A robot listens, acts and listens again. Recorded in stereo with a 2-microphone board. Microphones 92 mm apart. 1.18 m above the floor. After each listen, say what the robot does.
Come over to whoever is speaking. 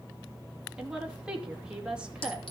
Turn 30° right.
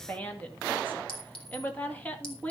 Turn 20° left.
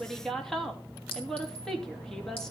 Drive 1.0 m forward.
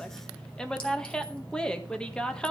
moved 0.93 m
Turn 10° left.
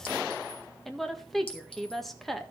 Drive 1.0 m forward.
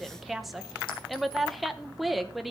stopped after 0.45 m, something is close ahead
I am next to the woman speaking.